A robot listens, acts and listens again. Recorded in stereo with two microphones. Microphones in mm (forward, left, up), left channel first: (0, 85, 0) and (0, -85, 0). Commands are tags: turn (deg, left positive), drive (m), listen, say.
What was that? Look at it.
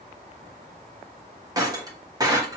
<turn deg="-20"/>
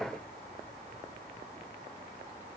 <listen/>
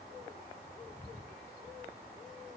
<say>I heard breaking glass, but can't make it out now. It was about straight ahead or 140° right.</say>